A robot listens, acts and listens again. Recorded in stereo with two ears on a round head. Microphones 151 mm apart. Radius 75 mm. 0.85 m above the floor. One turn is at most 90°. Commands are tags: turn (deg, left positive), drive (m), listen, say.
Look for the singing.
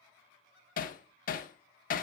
<listen/>
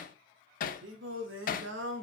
<turn deg="-90"/>
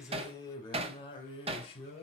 <turn deg="35"/>
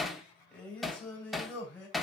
<turn deg="10"/>
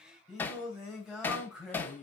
<say>Facing the singing.</say>